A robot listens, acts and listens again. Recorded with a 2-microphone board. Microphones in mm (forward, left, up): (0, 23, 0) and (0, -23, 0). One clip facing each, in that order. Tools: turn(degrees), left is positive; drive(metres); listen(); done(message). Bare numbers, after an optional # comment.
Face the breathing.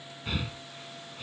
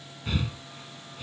turn(30)
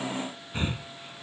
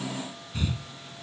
# So it is at 145° left.
turn(145)
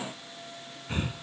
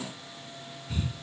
# The breathing is now 45° left.
turn(45)
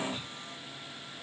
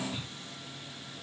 listen()
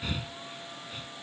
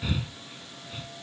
done("Facing the breathing.")